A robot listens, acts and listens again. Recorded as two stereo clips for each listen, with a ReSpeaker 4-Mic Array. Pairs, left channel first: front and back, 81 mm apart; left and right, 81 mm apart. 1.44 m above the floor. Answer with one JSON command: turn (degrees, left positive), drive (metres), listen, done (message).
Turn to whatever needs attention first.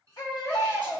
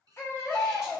{"turn": 35}
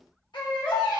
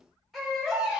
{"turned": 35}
{"done": "Facing the baby crying, 1 to 2 m away."}